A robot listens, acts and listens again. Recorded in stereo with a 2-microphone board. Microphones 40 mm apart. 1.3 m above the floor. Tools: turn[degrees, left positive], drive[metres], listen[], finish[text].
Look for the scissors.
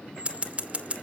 Thought: The scissors: about 30° right or 150° right.
Action: turn[-30]
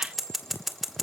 Action: finish[Facing the scissors.]